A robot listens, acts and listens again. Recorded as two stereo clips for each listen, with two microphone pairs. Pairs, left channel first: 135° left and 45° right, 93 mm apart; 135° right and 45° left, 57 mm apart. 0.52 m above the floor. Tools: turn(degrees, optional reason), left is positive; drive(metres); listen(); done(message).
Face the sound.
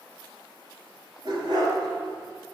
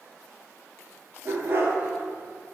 turn(degrees=-15, reason="The dog barking: 15° right.")
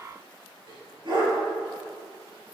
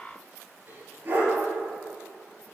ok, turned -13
turn(degrees=-15, reason="The dog barking is now 15° right.")
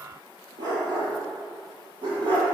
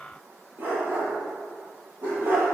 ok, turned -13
turn(degrees=-10, reason="The dog barking is now 10° right.")
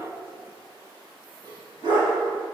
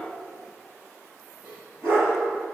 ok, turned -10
done("Found it: a dog barking, straight ahead, over 4 m away.")